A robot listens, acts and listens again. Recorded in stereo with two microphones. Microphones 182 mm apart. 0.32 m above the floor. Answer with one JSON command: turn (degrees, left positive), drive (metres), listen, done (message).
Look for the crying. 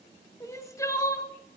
{"turn": 15}
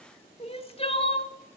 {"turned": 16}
{"turn": 145}
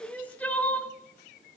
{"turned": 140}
{"done": "Found it: crying, straight ahead, under 1 m away."}